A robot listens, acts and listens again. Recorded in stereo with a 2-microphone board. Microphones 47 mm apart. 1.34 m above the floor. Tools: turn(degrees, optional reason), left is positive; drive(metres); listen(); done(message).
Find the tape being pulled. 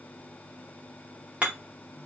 listen()
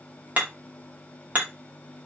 listen()
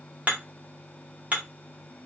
done("I can't make out tape being pulled to turn to.")